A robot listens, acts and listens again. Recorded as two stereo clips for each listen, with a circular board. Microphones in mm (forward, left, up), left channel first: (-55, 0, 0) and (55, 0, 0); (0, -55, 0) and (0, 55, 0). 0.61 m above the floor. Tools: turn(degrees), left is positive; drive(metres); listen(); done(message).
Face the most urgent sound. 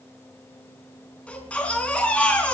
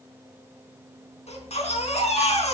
turn(degrees=-100)
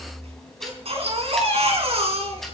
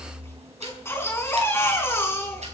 turn(degrees=-25)
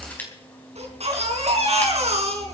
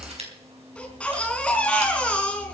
turn(degrees=-10)
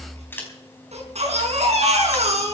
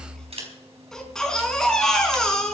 done("Found it: a baby crying, straight ahead.")